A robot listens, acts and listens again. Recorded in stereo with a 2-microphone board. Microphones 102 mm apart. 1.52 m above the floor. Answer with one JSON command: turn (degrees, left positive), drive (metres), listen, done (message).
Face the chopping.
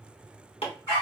{"turn": 70}
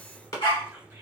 {"turn": 40}
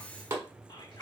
{"turn": -30}
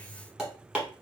{"done": "Facing the chopping, 1 to 2 m away."}